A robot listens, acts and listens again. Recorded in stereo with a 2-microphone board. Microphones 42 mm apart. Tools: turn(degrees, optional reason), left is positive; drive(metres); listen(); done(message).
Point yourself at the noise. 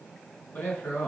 turn(degrees=45, reason="The man speaking: about 45° left or 135° left.")
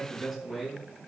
done("Found it: a man speaking, straight ahead, over 4 m away.")